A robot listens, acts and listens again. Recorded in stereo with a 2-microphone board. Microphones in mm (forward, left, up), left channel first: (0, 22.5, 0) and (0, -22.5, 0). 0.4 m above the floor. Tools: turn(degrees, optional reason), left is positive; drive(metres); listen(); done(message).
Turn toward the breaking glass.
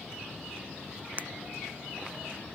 turn(degrees=-40, reason="The breaking glass: about 40° right or 140° right.")
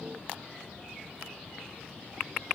listen()
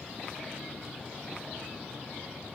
done("I heard breaking glass, but can't make it out now. It was about straight ahead or 100° right.")